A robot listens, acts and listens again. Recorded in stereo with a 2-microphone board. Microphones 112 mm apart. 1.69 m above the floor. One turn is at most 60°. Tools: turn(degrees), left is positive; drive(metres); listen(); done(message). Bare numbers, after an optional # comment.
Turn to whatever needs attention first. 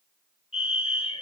# The fire alarm: about 65° left or 115° left.
turn(60)
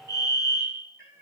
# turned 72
# So it is at 35° left.
turn(35)
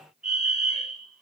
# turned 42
done("Found it: a fire alarm, straight ahead.")